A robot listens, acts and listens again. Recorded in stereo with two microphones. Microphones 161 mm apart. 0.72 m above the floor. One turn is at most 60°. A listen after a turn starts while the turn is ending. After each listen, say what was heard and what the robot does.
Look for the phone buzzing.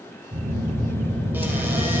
The phone buzzing: about 60° right or 120° right. Turn 60° right.
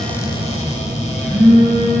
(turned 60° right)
So it is at 60° right. Turn 60° right.
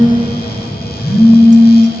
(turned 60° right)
Found it: a phone buzzing, straight ahead.